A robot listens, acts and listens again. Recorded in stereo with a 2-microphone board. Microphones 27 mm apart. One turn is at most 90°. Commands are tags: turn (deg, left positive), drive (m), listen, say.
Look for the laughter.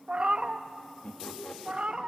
<turn deg="50"/>
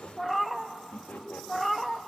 <turn deg="80"/>
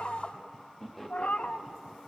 <say>Facing the laughter.</say>